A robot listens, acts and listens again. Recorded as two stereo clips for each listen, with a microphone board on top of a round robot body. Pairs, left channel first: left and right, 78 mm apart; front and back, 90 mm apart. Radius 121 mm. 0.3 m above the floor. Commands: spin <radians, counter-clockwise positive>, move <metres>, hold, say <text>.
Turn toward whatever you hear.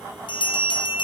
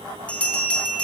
spin 1.31
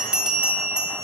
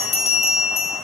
spin -0.17
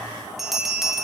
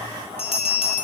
say Facing the bell.